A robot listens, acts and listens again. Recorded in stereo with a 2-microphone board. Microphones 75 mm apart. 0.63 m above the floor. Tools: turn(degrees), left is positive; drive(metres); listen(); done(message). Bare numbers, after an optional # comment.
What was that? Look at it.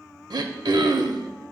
turn(-90)
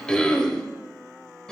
# So it is at 10° left.
turn(10)
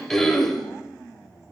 done("Facing the throat clearing, under 1 m away.")